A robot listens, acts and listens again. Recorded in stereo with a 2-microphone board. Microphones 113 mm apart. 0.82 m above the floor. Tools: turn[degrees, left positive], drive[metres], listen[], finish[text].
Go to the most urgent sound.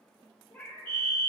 Action: turn[30]
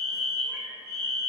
Thought: So it is at 130° left.
Action: turn[130]
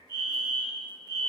Thought: The fire alarm is now 35° left.
Action: turn[35]
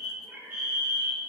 Thought: The fire alarm is now 15° right.
Action: turn[-15]
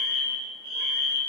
Action: drive[1.0]
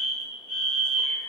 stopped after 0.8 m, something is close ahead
Action: finish[Arrived at the fire alarm, straight ahead.]